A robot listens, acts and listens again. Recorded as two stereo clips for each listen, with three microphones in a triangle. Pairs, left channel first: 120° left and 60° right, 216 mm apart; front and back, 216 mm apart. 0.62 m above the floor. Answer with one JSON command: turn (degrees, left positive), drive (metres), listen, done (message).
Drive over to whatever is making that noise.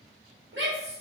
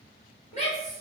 {"turn": -55}
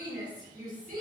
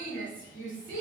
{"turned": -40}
{"turn": -15}
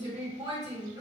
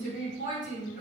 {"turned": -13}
{"drive": 1.0}
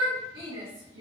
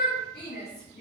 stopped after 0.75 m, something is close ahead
{"done": "I am next to the shout."}